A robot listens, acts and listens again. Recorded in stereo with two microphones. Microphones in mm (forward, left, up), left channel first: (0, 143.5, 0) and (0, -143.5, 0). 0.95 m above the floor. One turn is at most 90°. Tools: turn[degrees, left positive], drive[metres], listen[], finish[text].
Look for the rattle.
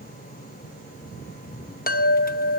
Action: listen[]
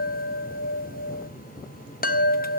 Action: listen[]
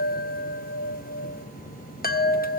Action: finish[I can't make out a rattle, only a chime.]